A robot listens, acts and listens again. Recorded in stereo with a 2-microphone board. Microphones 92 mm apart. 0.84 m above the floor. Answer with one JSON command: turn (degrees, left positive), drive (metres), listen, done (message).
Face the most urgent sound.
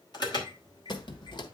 {"turn": 55}
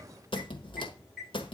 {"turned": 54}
{"done": "Facing the alarm, 2 to 4 m away."}